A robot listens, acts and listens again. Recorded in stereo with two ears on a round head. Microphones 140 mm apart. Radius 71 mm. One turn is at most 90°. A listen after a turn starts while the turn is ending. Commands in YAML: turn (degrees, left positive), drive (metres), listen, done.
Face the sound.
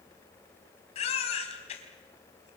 turn: 40
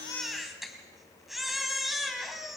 done: "Found it: a baby crying, straight ahead, 2 to 4 m away."